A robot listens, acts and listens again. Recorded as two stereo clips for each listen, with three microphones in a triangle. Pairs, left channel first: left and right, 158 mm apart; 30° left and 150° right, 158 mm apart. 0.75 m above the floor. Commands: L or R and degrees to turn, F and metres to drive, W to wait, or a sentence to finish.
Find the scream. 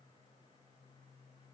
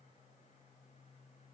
W
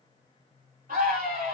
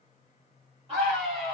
R100
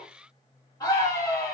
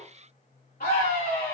L30
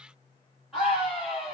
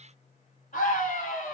Found it: a scream, straight ahead, 1 to 2 m away.